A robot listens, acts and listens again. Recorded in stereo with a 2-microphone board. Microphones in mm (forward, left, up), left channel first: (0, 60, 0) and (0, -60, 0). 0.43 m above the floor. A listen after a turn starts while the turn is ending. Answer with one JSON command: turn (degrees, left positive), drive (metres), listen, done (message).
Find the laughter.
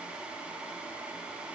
{"listen": true}
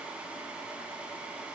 {"listen": true}
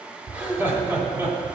{"turn": -25}
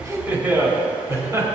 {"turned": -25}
{"turn": -25}
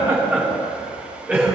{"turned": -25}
{"turn": -30}
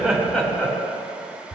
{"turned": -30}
{"turn": 15}
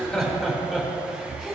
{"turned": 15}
{"done": "Found it: laughter, straight ahead, 2 to 4 m away."}